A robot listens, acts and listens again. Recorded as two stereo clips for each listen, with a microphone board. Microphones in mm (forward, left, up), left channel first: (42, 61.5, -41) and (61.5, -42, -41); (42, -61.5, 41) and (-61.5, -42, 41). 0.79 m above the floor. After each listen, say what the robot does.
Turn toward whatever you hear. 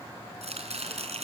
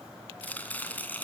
Turn 85° right.
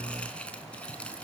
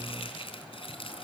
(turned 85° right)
Turn 20° left.
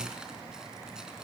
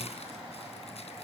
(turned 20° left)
Keep listening.
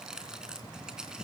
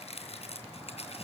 Facing the chopping, 2 to 4 m away.